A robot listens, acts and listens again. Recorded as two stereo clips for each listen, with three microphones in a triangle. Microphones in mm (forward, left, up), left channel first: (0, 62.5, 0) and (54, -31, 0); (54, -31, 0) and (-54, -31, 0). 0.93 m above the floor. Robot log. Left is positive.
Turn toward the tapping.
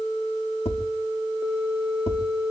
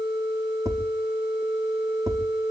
note: The tapping: 125° left.
cmd yaw +125
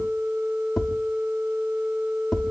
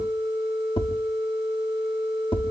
note: The tapping is now 35° left.
cmd yaw +35
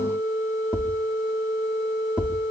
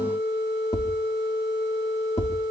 note: The tapping is now 15° left.
cmd yaw +15
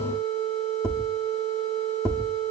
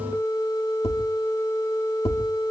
end: Facing the tapping.